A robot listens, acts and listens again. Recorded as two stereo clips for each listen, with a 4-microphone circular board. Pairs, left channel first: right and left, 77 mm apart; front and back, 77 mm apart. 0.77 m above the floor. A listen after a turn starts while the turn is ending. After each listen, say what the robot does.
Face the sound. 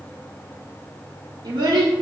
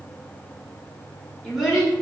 Turn 95° left.
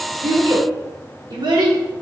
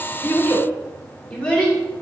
Turn 80° left.
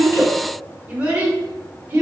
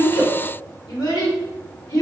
Turn 35° left.
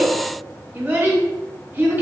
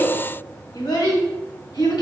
Turn 25° left.
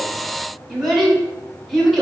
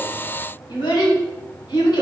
Found it: a child speaking, straight ahead.